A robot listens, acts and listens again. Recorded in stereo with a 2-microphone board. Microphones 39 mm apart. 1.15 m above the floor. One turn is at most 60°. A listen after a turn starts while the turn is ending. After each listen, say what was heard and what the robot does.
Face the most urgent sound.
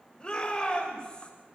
The shout: about 25° left or 155° left. Turn 25° left.
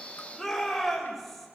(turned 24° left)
Facing the shout, over 4 m away.